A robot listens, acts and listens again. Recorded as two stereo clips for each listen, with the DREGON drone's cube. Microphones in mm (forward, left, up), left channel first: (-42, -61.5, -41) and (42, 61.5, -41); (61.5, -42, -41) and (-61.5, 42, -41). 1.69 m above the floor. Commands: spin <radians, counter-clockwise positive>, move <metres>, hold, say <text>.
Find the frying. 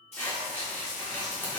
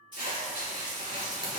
spin -1.57
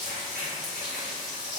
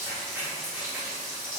spin 0.44
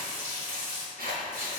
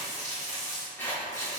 say Found it: frying, straight ahead, 1 to 2 m away.